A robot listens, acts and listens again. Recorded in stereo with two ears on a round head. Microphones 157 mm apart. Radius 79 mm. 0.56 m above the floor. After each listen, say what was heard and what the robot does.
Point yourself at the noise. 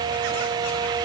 Keep listening.
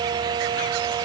Keep listening.
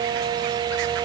I can't make out anything to turn to.